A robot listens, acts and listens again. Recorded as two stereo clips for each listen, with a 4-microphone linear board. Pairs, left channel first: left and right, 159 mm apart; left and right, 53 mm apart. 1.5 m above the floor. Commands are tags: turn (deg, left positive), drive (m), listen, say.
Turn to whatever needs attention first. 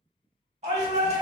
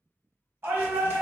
<turn deg="-50"/>
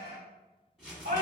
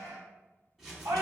<turn deg="-80"/>
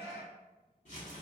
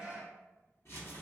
<turn deg="-15"/>
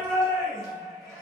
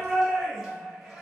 <say>Facing the shout.</say>